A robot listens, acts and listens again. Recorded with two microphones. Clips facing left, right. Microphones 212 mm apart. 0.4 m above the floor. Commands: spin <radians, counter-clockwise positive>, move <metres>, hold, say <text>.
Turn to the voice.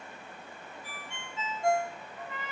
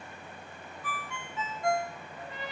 hold
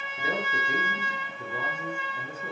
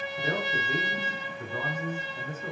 spin 0.52
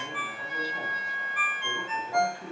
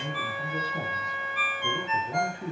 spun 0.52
spin -0.35
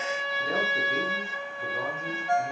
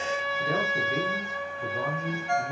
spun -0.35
say Facing the man speaking, over 4 m away.